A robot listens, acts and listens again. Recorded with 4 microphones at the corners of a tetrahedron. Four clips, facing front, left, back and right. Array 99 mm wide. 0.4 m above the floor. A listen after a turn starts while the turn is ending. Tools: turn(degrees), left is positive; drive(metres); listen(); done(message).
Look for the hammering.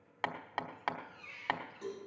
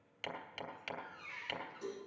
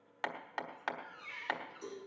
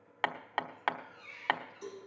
turn(degrees=-80)
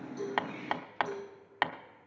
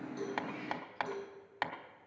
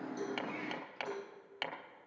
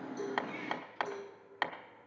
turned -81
done("Facing the hammering.")